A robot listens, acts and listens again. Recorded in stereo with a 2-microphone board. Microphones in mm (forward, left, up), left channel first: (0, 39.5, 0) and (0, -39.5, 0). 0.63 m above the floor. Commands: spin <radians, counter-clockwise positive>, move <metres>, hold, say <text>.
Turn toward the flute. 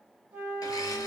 spin -0.35
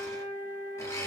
spin -2.53
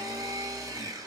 hold
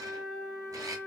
spin 0.52
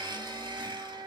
say Found it: a flute, straight ahead, 2 to 4 m away.